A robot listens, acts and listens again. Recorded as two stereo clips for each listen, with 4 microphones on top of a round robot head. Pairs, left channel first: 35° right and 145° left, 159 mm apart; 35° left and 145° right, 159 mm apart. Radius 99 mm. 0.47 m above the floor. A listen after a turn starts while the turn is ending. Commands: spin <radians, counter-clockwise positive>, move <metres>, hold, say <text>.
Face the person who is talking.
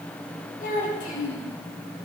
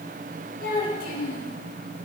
say Facing the child speaking.